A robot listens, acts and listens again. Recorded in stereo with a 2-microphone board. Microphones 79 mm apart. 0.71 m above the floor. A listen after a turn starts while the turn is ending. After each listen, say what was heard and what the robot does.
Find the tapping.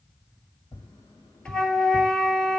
The tapping: about 60° left or 120° left. Turn 60° left.
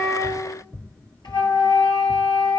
So it is at 25° left. Turn 25° left.
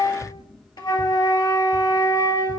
Keep listening.
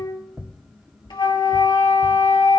Facing the tapping, 2 to 4 m away.